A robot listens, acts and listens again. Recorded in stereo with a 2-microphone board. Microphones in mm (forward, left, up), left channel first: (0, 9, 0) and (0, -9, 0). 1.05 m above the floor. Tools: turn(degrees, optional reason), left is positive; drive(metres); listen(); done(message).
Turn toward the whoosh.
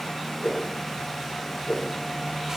turn(degrees=65, reason="The whoosh: about 65° left or 115° left.")
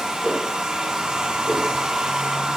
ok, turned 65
turn(degrees=50, reason="So it is at 50° left.")
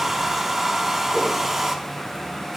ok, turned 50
listen()
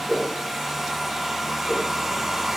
done("Facing the whoosh.")